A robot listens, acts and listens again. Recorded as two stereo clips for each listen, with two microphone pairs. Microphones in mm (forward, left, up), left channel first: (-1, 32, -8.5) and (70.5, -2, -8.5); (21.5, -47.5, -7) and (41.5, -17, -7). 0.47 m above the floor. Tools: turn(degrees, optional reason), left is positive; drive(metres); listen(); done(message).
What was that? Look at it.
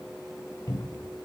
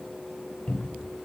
turn(degrees=180, reason="The cupboard door: straight behind.")
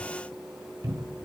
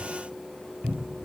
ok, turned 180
turn(degrees=15, reason="The cupboard door is now 15° left.")
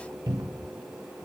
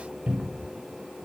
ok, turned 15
turn(degrees=10, reason="The cupboard door is now 10° left.")
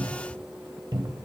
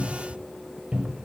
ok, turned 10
done("Facing the cupboard door, 1 to 2 m away.")